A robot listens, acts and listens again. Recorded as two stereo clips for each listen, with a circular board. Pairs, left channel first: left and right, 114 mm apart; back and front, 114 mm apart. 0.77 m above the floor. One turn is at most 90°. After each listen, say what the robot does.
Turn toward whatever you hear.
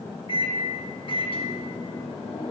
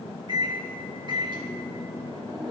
Turn 45° left.
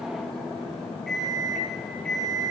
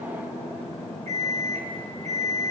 Facing the microwave, under 1 m away.